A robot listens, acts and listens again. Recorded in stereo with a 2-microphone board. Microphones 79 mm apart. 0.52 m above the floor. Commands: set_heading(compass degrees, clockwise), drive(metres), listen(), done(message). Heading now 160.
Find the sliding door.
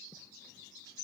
listen()
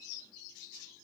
listen()
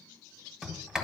set_heading(190)
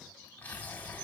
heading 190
set_heading(165)
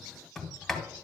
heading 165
done("Facing the sliding door, 1 to 2 m away.")